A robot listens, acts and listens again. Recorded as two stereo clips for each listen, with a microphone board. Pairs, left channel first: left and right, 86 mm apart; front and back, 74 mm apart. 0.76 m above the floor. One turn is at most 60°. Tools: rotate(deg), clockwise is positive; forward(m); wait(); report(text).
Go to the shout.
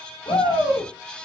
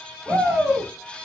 rotate(-60)
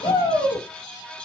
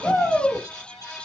rotate(-60)
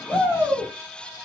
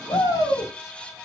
rotate(-25)
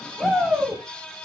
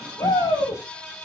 forward(1.0)
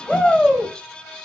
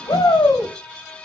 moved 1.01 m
rotate(-10)
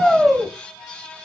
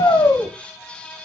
forward(1.0)
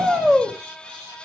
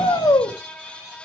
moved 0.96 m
forward(1.0)
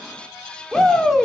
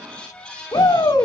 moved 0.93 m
forward(1.0)
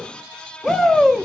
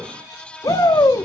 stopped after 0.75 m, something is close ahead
rotate(-10)
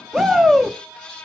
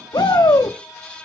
report("I am next to the shout.")